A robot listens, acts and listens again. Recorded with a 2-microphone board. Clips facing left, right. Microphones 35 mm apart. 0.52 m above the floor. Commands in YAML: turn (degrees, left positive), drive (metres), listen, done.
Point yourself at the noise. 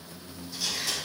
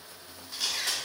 turn: -60
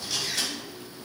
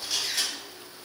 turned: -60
turn: -10
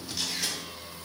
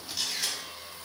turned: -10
done: "Found it: a camera shutter, straight ahead, under 1 m away."